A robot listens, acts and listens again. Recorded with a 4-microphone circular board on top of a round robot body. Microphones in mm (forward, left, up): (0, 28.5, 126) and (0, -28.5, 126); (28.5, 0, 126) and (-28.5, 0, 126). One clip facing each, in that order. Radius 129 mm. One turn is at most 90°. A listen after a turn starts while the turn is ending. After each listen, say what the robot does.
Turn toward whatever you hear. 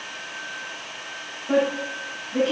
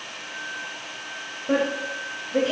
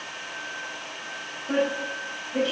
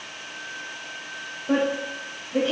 Turn 90° right.
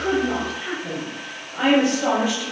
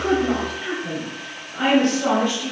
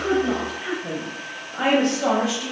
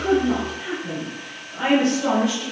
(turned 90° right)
Turn 15° left.
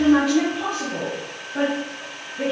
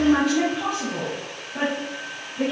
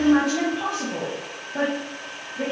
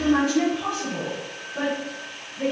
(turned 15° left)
Found it: a woman speaking, straight ahead.